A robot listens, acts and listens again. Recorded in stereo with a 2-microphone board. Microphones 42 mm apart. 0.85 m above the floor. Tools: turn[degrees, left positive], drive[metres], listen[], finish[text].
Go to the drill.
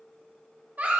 Action: listen[]
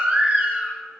Action: listen[]
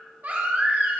Action: finish[I can't make out a drill, only a baby crying.]